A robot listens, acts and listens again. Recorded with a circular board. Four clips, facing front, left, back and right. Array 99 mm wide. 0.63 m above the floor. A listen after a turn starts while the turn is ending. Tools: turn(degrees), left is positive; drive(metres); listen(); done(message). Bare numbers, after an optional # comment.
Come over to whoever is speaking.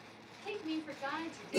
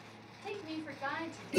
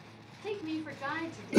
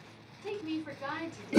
# The woman speaking: 165° right.
turn(-165)
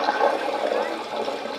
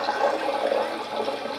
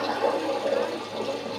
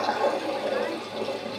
listen()
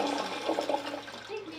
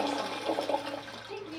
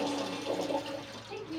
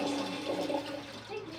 drive(1.0)
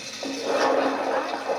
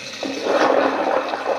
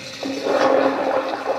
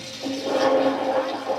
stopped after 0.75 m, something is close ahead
listen()
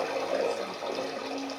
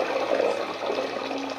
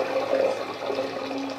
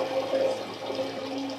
listen()
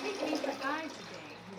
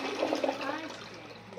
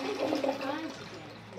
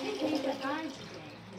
done("Arrived at the woman speaking, straight ahead.")